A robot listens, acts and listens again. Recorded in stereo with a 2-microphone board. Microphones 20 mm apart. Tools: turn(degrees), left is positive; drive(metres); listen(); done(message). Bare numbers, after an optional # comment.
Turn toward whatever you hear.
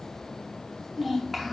turn(30)
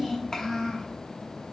# So it is at 135° left.
turn(135)
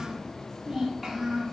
# The child speaking is now 20° right.
turn(-20)
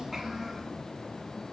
# The child speaking is now 10° right.
turn(-10)
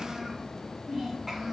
done("Facing the child speaking, 2 to 4 m away.")